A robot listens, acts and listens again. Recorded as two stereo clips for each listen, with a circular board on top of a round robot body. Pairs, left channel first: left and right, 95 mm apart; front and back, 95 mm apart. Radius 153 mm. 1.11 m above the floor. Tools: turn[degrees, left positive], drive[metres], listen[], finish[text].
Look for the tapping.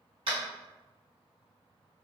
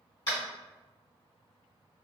Thought: The tapping: 45° right.
Action: turn[-45]
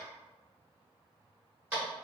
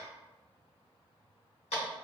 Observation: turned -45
Thought: The tapping is now 15° right.
Action: turn[-15]
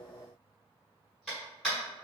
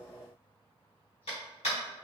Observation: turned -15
Action: finish[Found it: tapping, straight ahead.]